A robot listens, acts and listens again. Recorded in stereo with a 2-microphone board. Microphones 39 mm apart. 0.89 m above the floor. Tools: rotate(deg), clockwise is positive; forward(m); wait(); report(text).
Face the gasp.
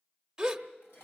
rotate(30)
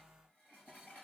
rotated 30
wait()
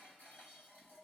report("I heard a gasp, but can't make it out now. It was about 15° left or 135° right.")